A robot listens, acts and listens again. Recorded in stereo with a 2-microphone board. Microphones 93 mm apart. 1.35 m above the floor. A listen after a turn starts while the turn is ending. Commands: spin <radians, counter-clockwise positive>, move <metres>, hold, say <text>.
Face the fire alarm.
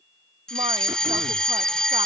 spin 0.52
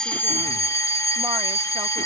spin 2.53
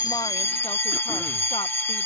spin 0.44
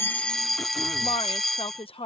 say Found it: a fire alarm, straight ahead.